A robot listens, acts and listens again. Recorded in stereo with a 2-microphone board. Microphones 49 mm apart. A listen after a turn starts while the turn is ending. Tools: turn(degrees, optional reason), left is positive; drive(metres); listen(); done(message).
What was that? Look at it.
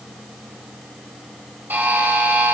turn(degrees=-45, reason="The buzzer: about 45° right or 135° right.")
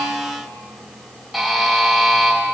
done("Facing the buzzer, 2 to 4 m away.")